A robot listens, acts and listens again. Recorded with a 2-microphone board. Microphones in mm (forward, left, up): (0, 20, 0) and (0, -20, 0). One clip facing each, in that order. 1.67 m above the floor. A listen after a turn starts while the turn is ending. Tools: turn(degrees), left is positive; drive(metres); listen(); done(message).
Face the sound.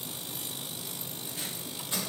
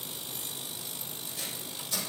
turn(degrees=35)
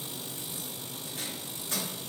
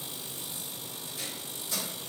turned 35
turn(degrees=110)
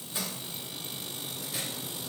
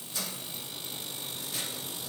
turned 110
listen()
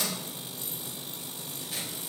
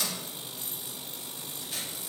done("Facing the tape being pulled, 2 to 4 m away.")